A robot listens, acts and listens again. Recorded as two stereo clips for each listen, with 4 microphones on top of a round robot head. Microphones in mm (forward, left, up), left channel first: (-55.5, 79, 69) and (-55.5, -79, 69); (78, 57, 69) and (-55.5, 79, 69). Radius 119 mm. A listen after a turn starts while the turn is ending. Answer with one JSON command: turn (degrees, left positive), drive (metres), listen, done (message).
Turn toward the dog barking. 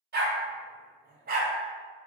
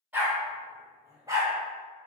{"turn": -120}
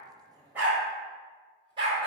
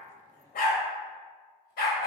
{"turn": -25}
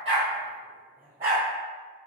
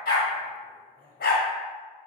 {"turn": -15}
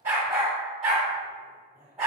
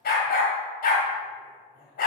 {"done": "Found it: a dog barking, straight ahead."}